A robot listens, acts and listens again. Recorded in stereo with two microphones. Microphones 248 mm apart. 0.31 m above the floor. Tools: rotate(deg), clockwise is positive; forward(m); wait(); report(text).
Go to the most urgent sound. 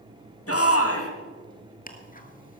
rotate(-65)
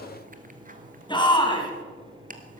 rotate(-20)
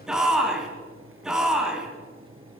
forward(1.0)
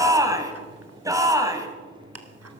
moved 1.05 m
rotate(15)
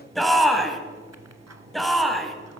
forward(1.0)
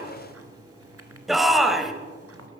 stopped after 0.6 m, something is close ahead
report("I am next to the shout.")